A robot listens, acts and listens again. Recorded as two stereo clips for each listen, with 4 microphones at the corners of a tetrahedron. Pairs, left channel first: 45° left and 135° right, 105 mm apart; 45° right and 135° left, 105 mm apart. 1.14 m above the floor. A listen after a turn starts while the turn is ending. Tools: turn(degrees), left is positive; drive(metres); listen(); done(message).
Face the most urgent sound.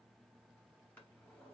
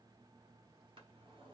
listen()
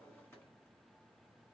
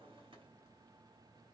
listen()
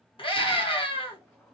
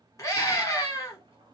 turn(degrees=15)
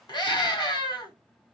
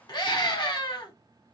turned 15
done("Found it: a scream, straight ahead.")